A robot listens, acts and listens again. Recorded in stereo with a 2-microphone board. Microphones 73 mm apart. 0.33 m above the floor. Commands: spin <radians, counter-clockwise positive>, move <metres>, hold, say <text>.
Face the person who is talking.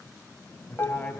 spin 0.44
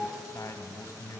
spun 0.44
spin 2.18
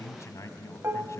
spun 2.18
spin 0.87
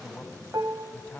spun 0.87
spin 0.35
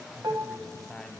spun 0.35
say Found it: a man speaking, straight ahead.